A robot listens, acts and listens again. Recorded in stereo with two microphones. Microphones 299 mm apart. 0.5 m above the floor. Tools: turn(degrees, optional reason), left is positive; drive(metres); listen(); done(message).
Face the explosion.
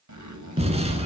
turn(degrees=-20, reason="The explosion: about 20° right or 160° right.")
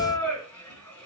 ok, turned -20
listen()
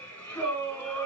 done("I heard an explosion, but can't make it out now. It was about straight ahead or 140° right.")